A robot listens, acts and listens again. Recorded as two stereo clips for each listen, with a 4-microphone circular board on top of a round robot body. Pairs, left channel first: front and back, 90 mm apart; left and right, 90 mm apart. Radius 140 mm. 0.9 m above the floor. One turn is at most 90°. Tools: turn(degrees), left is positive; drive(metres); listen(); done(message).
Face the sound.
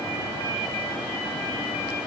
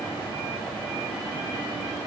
listen()
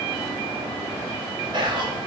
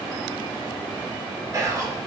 turn(degrees=-90)
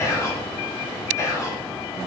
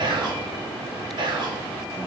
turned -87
turn(degrees=-55)
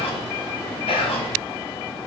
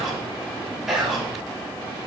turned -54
done("Facing the whispering.")